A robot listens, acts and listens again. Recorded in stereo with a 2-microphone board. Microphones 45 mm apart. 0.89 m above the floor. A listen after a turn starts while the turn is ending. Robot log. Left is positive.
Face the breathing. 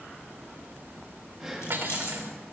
cmd yaw -30
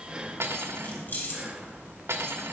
cmd idle
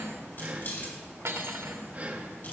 note: So it is at 140° right.
cmd yaw -140
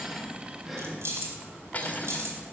note: The breathing is now 10° right.
cmd yaw -10
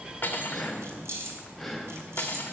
end: Found it: breathing, straight ahead, 1 to 2 m away.